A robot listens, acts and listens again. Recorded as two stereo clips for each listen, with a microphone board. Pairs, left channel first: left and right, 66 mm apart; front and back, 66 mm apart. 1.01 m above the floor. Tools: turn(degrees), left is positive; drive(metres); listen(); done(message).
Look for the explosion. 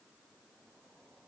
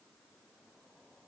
listen()
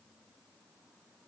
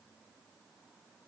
listen()
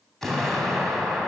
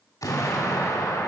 done("Facing the explosion.")